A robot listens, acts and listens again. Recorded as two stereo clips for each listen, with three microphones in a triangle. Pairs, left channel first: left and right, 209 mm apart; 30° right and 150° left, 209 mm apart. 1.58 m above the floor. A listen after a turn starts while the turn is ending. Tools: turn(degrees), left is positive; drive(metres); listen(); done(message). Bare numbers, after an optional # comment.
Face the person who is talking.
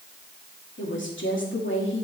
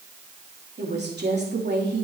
# The woman speaking: 115° left.
turn(115)
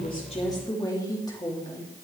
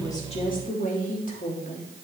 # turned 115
# The woman speaking is now 20° left.
turn(20)
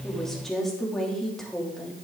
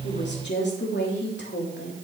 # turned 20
done("Facing the woman speaking, 2 to 4 m away.")